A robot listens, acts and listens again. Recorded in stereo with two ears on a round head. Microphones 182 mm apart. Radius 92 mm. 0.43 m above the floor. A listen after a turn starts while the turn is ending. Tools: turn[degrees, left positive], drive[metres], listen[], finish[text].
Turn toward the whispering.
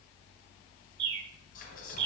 Thought: The whispering: about 45° left or 135° left.
Action: turn[45]
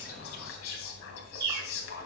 Thought: So it is at 85° left.
Action: turn[85]
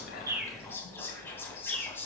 Thought: The whispering is now 10° left.
Action: turn[10]
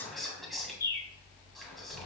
Action: finish[Found it: whispering, straight ahead, 2 to 4 m away.]